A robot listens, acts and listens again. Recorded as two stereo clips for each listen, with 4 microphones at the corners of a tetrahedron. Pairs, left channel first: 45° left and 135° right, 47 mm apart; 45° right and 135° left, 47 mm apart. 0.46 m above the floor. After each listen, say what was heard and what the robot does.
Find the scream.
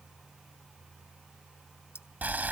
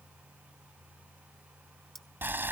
Keep listening.
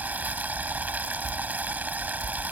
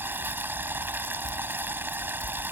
Keep listening.
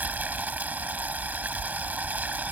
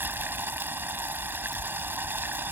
I can't make out a scream to turn to.